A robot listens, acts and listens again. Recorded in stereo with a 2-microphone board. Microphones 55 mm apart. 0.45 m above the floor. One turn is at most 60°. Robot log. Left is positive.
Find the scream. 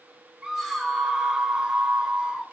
cmd yaw -30
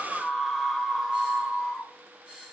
note: So it is at 10° left.
cmd yaw +10
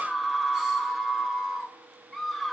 end: Facing the scream.